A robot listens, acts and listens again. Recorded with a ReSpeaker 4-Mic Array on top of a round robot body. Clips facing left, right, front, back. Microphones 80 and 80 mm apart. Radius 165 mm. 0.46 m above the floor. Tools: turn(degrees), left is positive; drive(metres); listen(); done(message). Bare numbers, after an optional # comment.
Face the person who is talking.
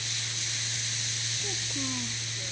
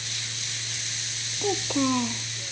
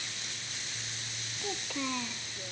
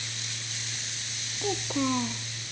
# The child speaking: 115° right.
turn(-115)
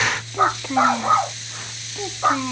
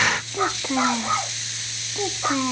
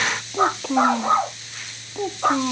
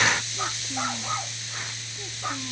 # The child speaking is now 10° right.
turn(-10)
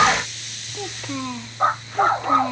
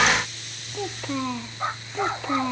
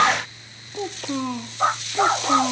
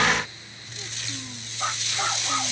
done("Facing the child speaking.")